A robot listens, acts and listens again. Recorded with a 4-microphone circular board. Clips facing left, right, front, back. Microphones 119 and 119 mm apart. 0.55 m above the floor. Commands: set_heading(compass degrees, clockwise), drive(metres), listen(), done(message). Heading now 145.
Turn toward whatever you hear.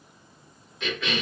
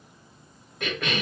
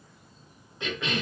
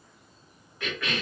set_heading(210)
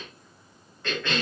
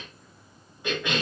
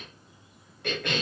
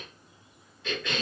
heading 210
set_heading(225)
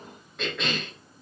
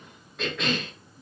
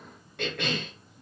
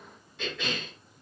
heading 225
done("Found it: a cough, straight ahead.")